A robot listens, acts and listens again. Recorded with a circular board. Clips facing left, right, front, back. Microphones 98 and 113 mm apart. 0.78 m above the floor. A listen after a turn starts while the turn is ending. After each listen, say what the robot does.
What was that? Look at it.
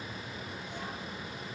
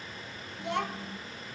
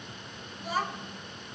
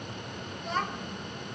Turn 85° right.
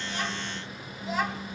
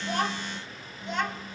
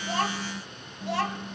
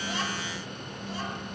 Facing the child speaking.